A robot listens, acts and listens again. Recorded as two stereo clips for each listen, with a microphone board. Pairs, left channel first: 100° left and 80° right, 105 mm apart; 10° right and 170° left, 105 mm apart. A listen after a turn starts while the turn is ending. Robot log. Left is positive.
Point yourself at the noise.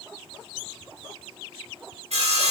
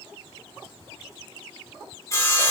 note: The sawing: 70° right.
cmd yaw -70
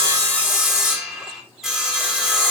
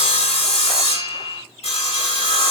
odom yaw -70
note: The sawing is now 10° left.
cmd yaw +10
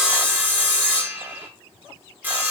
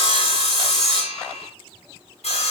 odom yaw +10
end: Found it: sawing, straight ahead, 2 to 4 m away.